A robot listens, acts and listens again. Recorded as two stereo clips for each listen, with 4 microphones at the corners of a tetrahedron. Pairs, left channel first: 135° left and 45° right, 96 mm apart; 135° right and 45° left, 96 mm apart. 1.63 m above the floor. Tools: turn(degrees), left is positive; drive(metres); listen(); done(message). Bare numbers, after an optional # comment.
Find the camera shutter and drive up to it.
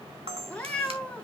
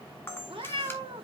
# The camera shutter: 70° right.
turn(-70)
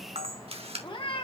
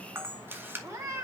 # The camera shutter is now 25° right.
turn(-25)
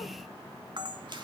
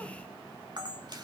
drive(1.0)
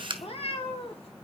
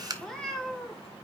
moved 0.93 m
drive(1.0)
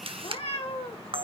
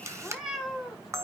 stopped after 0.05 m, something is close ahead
# The camera shutter is now 15° right.
turn(-15)
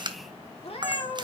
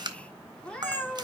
done("Arrived at the camera shutter, straight ahead.")